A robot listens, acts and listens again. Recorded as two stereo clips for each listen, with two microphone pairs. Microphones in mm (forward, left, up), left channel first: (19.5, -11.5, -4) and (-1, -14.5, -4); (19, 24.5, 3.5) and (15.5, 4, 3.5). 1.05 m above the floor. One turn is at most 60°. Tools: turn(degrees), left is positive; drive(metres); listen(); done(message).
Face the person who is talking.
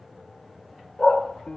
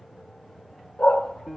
listen()
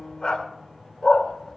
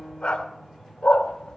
listen()
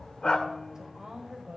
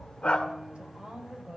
turn(degrees=-60)
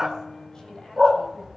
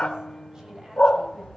turn(degrees=-45)
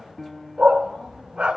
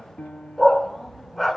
listen()
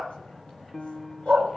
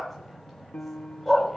listen()
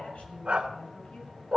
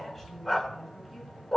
done("Found it: a woman speaking, straight ahead, over 4 m away.")